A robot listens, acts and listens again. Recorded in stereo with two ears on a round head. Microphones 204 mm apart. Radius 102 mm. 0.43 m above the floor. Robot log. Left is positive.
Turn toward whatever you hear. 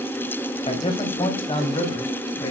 note: The man speaking: about 25° left or 155° left.
cmd yaw +25
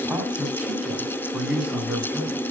end: Facing the man speaking, over 4 m away.